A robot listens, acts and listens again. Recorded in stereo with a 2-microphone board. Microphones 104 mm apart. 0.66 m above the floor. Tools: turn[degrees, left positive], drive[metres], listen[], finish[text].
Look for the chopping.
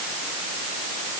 Action: listen[]
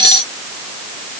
Action: listen[]
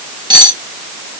Action: finish[I can't make out chopping, only cutlery clinking.]